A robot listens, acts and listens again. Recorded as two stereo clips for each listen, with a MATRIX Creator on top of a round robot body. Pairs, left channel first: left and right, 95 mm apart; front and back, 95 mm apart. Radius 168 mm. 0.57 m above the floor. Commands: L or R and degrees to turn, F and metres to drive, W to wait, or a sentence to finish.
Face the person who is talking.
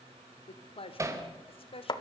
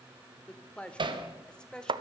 L80
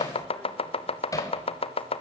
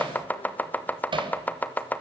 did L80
W
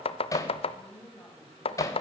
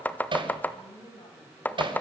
L20
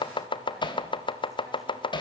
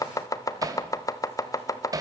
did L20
W
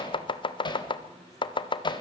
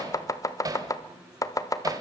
W
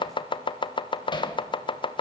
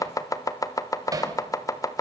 I heard a woman speaking from this way, but can't make it out now.